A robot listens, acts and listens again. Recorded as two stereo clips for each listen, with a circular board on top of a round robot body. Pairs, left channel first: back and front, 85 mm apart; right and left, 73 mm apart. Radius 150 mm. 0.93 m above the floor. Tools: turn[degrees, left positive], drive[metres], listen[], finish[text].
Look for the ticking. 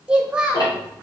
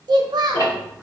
Thought: The ticking: 130° right.
Action: turn[-130]
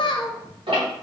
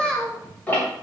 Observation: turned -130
Thought: The ticking is now 20° right.
Action: turn[-20]
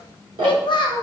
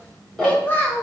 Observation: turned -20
Action: finish[Found it: ticking, straight ahead, 1 to 2 m away.]